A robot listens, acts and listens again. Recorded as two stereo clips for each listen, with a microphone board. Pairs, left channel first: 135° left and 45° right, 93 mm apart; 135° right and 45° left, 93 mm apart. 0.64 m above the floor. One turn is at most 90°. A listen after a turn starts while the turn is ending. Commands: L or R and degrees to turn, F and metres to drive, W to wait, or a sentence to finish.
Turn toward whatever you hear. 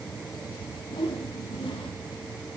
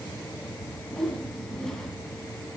L90
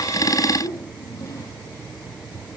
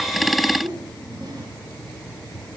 L85
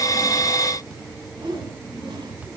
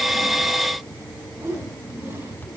R15
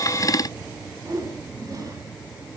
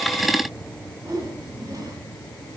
Facing the whoosh, 2 to 4 m away.